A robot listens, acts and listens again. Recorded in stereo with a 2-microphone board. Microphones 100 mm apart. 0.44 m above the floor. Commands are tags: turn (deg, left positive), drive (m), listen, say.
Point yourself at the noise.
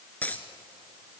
<turn deg="15"/>
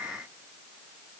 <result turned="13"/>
<listen/>
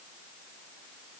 <say>I heard a dropped coin, but can't make it out now. It was about 5° left or 150° left.</say>